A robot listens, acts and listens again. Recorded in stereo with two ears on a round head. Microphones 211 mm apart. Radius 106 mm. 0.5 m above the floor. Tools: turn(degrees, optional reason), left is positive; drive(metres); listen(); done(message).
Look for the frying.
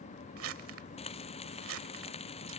turn(degrees=25, reason="The frying: about 25° left or 155° left.")
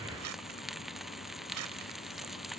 done("Facing the frying.")